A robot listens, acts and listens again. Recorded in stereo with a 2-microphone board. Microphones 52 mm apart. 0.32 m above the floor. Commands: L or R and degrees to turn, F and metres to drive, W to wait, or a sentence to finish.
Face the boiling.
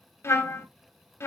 W
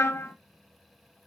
W
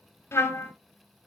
I can't make out boiling to turn to.